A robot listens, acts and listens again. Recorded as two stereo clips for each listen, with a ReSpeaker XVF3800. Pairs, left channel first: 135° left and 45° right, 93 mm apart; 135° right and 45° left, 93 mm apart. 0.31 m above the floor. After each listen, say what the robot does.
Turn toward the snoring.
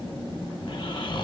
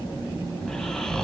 Turn 140° left.
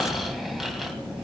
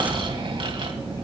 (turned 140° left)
Turn 45° left.
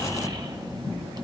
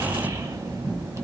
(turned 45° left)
Turn 10° right.
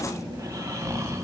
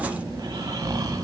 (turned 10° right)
Facing the snoring, 1 to 2 m away.